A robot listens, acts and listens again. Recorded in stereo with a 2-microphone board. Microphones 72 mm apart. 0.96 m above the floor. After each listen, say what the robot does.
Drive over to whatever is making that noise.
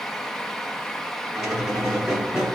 Turn 30° right.
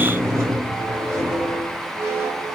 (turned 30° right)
Turn 140° right.
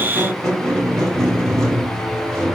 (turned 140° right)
Turn 10° left.
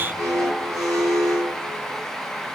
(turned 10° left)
Drive 1.0 m forward.
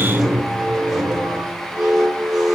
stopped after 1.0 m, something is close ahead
I am next to the squeak.